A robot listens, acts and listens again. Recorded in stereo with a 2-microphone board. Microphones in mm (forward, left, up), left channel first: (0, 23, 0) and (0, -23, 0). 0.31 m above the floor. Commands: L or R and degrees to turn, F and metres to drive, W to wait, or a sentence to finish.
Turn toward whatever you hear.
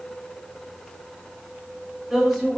R30
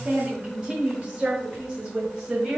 R15
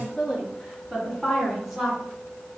L30
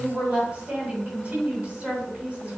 R25
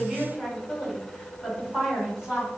R15
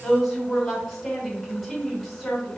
Found it: a woman speaking, straight ahead.